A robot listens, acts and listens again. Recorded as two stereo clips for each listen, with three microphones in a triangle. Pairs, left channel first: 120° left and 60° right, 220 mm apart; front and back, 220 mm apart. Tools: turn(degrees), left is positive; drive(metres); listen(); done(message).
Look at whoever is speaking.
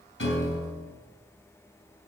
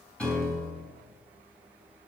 listen()
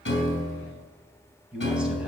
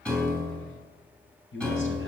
turn(degrees=25)
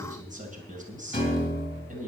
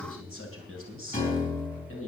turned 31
done("Found it: a man speaking, straight ahead.")